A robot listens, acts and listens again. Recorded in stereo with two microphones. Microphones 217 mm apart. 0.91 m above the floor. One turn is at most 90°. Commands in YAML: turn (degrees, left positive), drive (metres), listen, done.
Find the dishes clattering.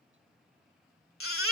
listen: true
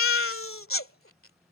listen: true
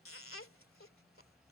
done: "I can't make out dishes clattering to turn to."